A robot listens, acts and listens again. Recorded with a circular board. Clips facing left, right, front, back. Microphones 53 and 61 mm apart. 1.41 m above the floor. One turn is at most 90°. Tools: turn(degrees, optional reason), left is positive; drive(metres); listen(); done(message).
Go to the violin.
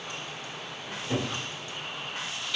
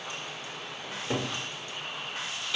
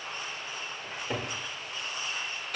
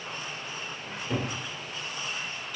listen()
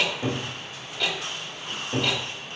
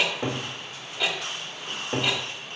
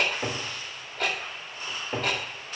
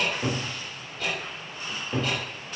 listen()
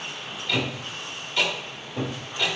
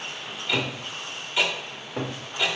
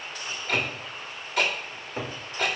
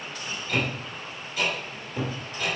done("I can't make out a violin, only a cupboard door and ticking.")